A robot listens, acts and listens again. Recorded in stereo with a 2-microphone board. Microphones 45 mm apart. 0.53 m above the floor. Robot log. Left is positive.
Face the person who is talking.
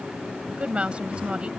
note: The woman speaking: about 25° right or 155° right.
cmd yaw -25
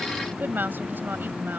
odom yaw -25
note: So it is at 130° right.
cmd yaw -130
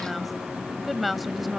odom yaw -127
end: Found it: a woman speaking, straight ahead.